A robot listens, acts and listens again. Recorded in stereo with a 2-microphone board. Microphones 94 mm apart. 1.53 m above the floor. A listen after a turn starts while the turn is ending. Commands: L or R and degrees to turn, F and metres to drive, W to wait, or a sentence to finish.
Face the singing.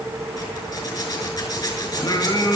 L40
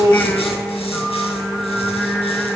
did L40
Found it: singing, straight ahead.